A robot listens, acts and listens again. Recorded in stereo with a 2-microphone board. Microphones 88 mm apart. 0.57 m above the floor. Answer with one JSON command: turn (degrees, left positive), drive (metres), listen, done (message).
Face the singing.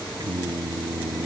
{"turn": -45}
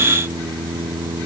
{"turn": -85}
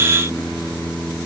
{"turn": 10}
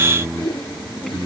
{"done": "Found it: singing, straight ahead."}